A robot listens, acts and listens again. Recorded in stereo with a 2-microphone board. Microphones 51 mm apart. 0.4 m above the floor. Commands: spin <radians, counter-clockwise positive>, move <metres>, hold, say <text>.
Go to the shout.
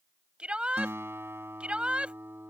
spin -0.35
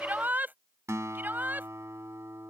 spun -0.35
spin -2.36
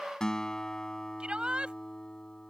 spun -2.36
spin -0.44
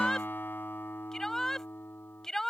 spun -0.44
spin 0.17
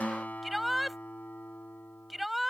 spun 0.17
move 1.0
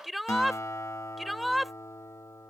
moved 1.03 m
move 1.0
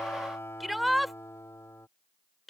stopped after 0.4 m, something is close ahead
say I am next to the shout.